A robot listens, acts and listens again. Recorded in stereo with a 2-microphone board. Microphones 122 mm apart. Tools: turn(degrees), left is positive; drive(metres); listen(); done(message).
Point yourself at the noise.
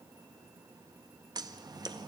turn(degrees=-35)
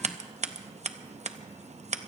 turn(degrees=-110)
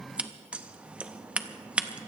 turn(degrees=-10)
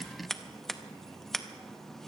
done("Facing the scissors, under 1 m away.")